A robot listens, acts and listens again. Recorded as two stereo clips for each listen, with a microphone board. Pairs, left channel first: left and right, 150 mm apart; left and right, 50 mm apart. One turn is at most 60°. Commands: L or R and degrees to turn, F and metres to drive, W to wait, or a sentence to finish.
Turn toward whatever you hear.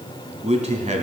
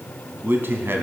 R50
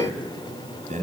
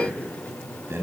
R55
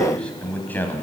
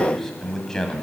L15
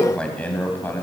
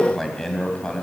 L15
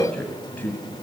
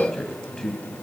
L15
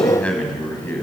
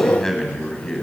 L15
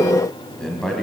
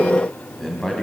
Found it: a man speaking, straight ahead.